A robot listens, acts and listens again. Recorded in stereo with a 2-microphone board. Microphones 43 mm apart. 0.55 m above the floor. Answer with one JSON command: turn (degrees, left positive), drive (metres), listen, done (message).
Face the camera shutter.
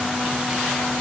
{"listen": true}
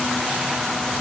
{"listen": true}
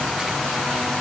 {"done": "I can't make out a camera shutter."}